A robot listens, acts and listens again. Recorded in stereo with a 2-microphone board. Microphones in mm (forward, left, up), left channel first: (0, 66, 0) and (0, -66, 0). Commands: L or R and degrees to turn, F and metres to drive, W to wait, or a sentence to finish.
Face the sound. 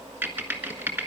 R30
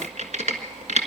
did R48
R115
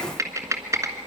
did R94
R25
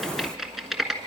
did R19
Facing the typing on a keyboard.